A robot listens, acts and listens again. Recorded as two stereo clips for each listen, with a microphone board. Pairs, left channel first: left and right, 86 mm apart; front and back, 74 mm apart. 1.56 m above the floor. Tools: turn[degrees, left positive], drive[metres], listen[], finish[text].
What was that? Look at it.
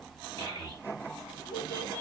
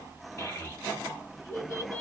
Thought: The child speaking: 50° right.
Action: turn[-50]
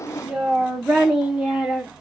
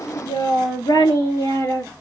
Thought: The child speaking is now 10° right.
Action: turn[-10]
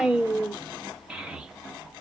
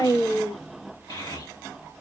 Thought: The child speaking is now 10° right.
Action: turn[-10]
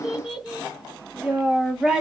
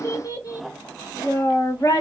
Thought: The child speaking is now 10° right.
Action: turn[-10]
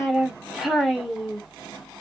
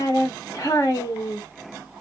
Action: finish[Found it: a child speaking, straight ahead.]